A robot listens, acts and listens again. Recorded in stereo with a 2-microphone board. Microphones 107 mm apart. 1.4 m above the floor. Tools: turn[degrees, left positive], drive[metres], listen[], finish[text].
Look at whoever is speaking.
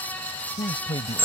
Thought: The man speaking: about 55° left or 125° left.
Action: turn[55]
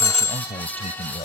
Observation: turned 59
Thought: So it is at 70° left.
Action: turn[70]
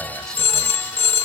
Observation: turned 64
Action: listen[]
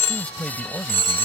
Action: finish[Found it: a man speaking, straight ahead.]